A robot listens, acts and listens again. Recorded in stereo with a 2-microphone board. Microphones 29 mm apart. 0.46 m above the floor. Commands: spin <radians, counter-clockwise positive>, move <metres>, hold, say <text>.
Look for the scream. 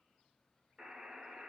hold
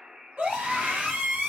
spin -1.05
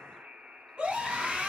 spin -0.61
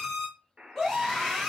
spin 0.17
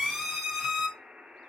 say Facing the scream.